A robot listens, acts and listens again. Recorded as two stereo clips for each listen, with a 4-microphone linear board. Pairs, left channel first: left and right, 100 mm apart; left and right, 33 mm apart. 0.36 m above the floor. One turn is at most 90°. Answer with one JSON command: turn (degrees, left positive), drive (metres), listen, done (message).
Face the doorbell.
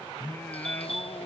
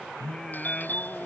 {"turn": 75}
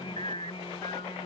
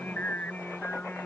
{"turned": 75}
{"listen": true}
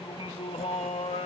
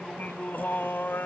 {"listen": true}
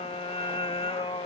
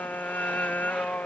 {"done": "I heard a doorbell, but can't make it out now. It was about straight ahead or 30° left."}